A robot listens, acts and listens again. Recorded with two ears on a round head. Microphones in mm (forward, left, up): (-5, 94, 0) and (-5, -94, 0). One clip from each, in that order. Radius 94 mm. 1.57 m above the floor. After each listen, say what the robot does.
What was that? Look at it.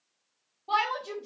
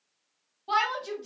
Turn 90° right.
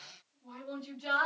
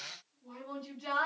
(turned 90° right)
Found it: a shout, straight ahead, 1 to 2 m away.